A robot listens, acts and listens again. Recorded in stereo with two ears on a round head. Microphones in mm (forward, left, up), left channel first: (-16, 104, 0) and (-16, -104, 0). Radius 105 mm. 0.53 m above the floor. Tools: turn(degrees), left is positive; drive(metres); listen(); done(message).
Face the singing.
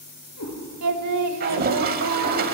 turn(degrees=-90)
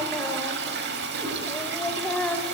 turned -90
done("Found it: singing, straight ahead, under 1 m away.")